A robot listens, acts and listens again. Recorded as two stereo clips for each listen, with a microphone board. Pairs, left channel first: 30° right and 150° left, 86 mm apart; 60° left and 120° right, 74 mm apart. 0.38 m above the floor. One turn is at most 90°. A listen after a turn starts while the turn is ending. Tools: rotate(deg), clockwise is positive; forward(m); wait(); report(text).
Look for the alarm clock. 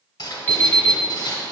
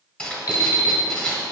rotate(-35)
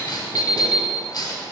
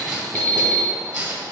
report("Facing the alarm clock.")